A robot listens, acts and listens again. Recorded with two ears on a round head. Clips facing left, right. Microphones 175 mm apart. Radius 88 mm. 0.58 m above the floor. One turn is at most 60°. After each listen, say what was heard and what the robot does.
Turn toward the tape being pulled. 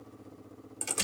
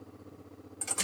Keep listening.
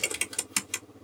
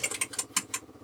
Keep listening.
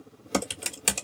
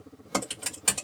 I can't make out tape being pulled to turn to.